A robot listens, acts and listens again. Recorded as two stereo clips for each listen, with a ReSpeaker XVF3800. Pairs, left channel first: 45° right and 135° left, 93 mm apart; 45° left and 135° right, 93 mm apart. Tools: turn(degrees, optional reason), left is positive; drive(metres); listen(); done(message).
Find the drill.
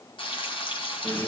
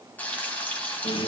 listen()
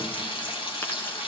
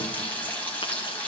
listen()
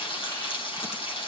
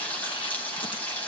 done("I can't make out a drill to turn to.")